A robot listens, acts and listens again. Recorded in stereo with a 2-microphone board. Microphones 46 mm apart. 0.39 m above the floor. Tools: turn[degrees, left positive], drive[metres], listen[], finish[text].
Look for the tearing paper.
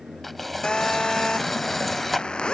Action: turn[30]
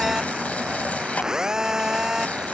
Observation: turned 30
Thought: So it is at 145° left.
Action: turn[145]
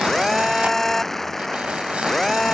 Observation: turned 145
Action: listen[]
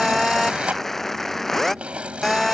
Thought: The tearing paper is now 30° right.
Action: turn[-30]
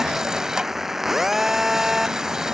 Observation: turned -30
Thought: The tearing paper is now 15° right.
Action: turn[-15]
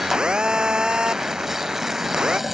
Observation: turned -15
Action: finish[Found it: tearing paper, straight ahead.]